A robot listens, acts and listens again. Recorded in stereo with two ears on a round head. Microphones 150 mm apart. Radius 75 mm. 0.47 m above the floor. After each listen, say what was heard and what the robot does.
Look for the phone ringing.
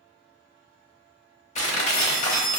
The phone ringing: about 60° left or 120° left. Turn 60° left.
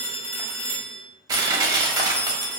So it is at 10° left. Turn 10° left.
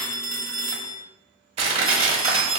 Found it: a phone ringing, straight ahead, 1 to 2 m away.